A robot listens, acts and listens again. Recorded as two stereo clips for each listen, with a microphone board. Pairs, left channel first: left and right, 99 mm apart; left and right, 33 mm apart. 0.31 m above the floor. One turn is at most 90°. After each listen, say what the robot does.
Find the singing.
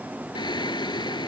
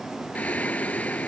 Turn 50° left.
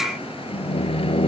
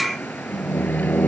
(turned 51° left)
Turn 80° left.
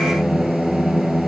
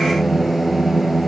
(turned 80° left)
Found it: singing, straight ahead.